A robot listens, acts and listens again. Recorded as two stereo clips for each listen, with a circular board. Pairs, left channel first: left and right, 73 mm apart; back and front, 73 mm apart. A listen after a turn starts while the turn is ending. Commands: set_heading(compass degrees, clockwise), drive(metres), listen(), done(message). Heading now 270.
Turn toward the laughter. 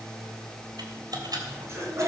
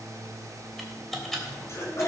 set_heading(45)
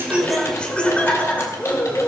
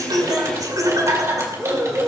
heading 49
set_heading(19)
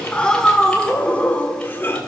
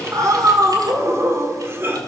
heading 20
set_heading(335)
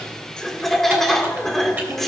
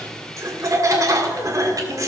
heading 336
done("Facing the laughter, 1 to 2 m away.")